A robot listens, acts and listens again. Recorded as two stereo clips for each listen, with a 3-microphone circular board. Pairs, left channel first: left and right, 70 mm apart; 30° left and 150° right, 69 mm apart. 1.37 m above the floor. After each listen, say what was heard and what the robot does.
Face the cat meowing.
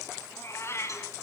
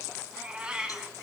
The cat meowing: 135° left. Turn 135° left.
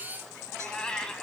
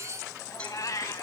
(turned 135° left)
The cat meowing is now 15° left. Turn 15° left.
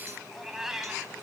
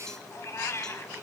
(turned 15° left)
Found it: a cat meowing, straight ahead, 2 to 4 m away.